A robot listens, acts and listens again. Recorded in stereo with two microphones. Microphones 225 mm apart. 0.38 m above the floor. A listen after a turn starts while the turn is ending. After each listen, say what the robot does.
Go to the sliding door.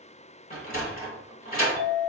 Turn 40° left.
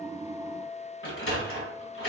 Turn 100° left.
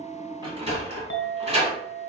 Turn 30° right.
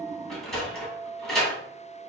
Drive 1.0 m forward.
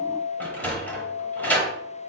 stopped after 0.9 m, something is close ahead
Turn 10° left.
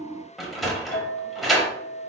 I am next to the sliding door.